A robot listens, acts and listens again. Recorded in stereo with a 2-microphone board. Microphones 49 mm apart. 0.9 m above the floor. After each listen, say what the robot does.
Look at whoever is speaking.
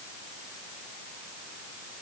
Keep listening.
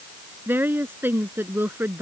Turn 45° right.
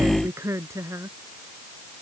Turn 90° right.
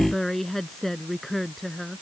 Found it: a woman speaking, straight ahead.